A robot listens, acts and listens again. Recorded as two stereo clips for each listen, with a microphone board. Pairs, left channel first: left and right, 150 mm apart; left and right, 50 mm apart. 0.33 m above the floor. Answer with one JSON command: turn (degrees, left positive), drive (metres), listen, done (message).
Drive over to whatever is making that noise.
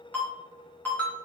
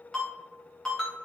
{"turn": 30}
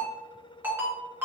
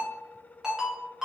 {"turn": -15}
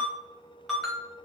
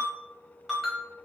{"drive": 1.0}
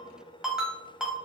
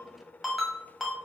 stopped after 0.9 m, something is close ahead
{"done": "I am next to the ringtone."}